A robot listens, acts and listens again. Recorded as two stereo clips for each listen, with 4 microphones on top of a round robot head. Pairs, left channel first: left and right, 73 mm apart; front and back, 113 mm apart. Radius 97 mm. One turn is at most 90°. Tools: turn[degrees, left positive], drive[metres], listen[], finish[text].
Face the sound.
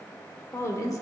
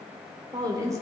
Thought: The woman speaking: 120° left.
Action: turn[90]
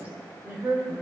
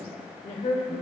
Thought: The woman speaking is now 30° right.
Action: turn[-30]
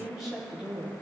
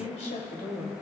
Thought: The woman speaking is now 10° right.
Action: turn[-10]
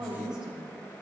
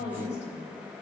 Thought: The woman speaking is now 10° right.
Action: turn[-10]
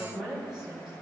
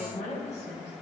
Action: finish[Found it: a woman speaking, straight ahead, over 4 m away.]